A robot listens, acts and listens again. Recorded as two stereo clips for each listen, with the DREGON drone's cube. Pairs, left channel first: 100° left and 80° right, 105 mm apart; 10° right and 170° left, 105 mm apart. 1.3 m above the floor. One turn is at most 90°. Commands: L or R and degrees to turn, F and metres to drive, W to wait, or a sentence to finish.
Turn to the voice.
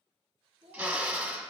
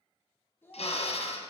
R80
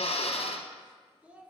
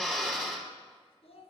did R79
Facing the child speaking.